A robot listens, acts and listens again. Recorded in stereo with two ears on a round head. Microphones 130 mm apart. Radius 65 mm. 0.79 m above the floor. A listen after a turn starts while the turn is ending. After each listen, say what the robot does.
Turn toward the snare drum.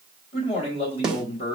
Turn 30° right.
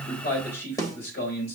Turn 25° left.
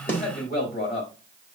Keep listening.
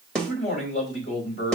Found it: a snare drum, straight ahead, 1 to 2 m away.